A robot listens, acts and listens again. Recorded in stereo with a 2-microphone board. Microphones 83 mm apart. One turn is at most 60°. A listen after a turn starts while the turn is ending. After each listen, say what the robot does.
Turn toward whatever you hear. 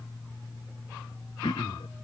Turn 60° left.
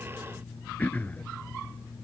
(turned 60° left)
Turn 15° left.
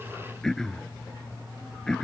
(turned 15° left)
Facing the throat clearing.